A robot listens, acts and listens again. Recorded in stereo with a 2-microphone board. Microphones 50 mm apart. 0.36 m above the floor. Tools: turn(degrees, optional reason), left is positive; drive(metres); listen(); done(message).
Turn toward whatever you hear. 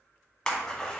turn(degrees=30)
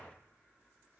listen()
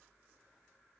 done("I heard a splash, but can't make it out now. It was about 15° right or 135° left.")